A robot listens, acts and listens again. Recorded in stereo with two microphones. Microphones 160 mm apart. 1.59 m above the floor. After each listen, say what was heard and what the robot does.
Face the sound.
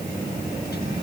Keep listening.
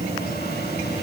Keep listening.
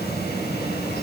I can't make out anything to turn to.